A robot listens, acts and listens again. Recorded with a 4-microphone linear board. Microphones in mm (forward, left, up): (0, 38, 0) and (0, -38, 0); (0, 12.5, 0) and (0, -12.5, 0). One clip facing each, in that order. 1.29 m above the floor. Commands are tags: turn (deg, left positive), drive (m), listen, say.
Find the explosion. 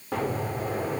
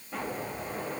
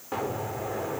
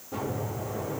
<turn deg="90"/>
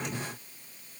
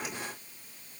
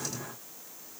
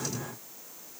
<say>I heard an explosion from this way, but can't make it out now.</say>